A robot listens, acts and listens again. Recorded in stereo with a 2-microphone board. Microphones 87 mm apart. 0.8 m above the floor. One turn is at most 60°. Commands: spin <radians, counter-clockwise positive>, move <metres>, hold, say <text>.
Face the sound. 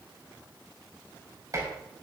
spin -0.70
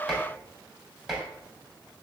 say Found it: dishes clattering, straight ahead.